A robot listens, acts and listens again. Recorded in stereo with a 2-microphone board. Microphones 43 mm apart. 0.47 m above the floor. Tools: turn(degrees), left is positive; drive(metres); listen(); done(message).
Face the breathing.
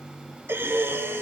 turn(degrees=-70)
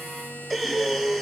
done("Found it: breathing, straight ahead.")